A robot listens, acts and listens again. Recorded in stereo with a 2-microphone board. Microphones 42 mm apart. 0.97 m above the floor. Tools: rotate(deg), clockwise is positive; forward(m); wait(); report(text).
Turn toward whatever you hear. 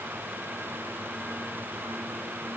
wait()
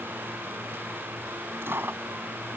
rotate(65)
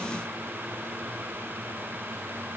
wait()
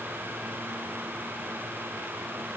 report("I heard a dropped coin, but can't make it out now. It was about straight ahead or 50° right.")